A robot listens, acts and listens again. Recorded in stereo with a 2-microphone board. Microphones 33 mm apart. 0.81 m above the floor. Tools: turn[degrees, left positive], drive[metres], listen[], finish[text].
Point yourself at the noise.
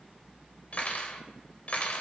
Thought: The cutlery clinking: about 50° left or 130° left.
Action: turn[50]
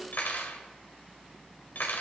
Thought: So it is at 80° left.
Action: turn[80]
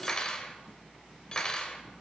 Thought: The cutlery clinking is now 25° left.
Action: turn[25]
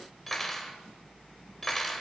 Action: finish[Facing the cutlery clinking.]